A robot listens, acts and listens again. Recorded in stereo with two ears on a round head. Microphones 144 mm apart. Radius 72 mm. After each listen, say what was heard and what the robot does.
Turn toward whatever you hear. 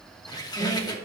The squeak: about 25° left or 155° left. Turn 25° left.
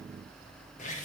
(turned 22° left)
So it is at 130° left. Turn 130° left.
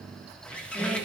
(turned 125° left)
Found it: a squeak, straight ahead.